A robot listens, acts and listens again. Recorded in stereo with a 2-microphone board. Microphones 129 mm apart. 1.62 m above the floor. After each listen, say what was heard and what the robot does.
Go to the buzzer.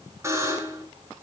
The buzzer: about 20° right or 160° right. Turn 20° right.
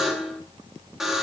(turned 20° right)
Drive 1.0 m forward.
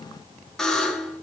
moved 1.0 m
Drive 1.0 m forward.
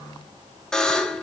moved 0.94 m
Drive 1.0 m forward.
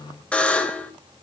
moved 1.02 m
The buzzer is now 10° left. Turn 10° left.
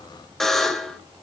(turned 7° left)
Drive 1.0 m forward.
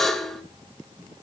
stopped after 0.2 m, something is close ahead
Arrived at the buzzer, straight ahead.